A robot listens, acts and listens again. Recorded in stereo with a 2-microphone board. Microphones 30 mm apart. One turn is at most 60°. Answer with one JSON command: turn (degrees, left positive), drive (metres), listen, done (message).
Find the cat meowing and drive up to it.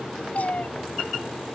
{"turn": 60}
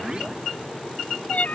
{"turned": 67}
{"turn": 55}
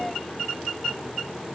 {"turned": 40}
{"turn": 15}
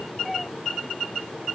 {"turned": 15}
{"listen": true}
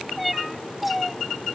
{"drive": 1.0}
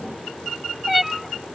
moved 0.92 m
{"drive": 1.0}
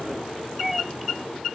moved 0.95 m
{"turn": -10}
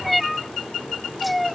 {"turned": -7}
{"drive": 1.0}
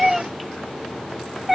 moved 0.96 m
{"drive": 1.0}
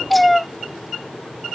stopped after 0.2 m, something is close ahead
{"done": "Arrived at the cat meowing, straight ahead."}